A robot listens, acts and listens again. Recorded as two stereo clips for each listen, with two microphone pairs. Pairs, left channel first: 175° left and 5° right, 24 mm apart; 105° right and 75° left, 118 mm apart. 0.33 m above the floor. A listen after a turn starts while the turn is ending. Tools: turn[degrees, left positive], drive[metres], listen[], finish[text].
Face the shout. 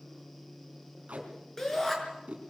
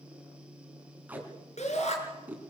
Thought: The shout: 115° right.
Action: turn[-115]
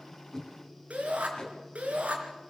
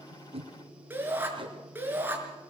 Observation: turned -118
Action: finish[Found it: a shout, straight ahead, over 4 m away.]